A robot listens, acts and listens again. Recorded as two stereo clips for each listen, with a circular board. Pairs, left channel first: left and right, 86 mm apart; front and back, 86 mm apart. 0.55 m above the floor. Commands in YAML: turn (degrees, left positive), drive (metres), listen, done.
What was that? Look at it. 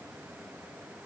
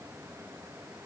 listen: true
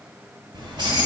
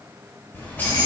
turn: -75
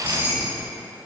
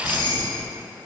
turn: -30
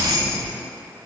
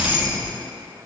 done: "Found it: keys jangling, straight ahead."